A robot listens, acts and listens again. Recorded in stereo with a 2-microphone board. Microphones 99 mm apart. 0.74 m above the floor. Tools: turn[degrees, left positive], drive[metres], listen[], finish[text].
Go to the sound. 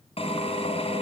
Action: turn[90]
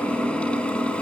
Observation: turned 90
Thought: So it is at 10° left.
Action: turn[10]
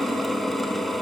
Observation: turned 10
Action: drive[1.0]
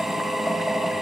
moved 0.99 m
Action: drive[1.0]
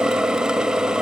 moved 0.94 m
Action: drive[1.0]
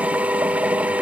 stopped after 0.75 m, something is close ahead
Thought: The drill is now 15° right.
Action: turn[-15]
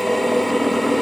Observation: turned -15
Action: finish[I am next to the drill.]